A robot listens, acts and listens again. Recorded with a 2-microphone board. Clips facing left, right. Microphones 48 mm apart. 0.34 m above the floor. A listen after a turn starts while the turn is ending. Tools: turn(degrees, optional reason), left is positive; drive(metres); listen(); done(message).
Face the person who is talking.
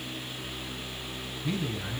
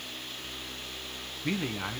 turn(degrees=-65, reason="The man speaking: about 65° right or 115° right.")
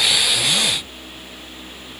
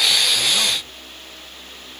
listen()
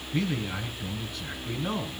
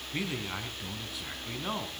turn(degrees=-10, reason="So it is at 10° right.")
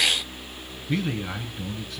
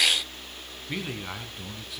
done("Facing the man speaking, 2 to 4 m away.")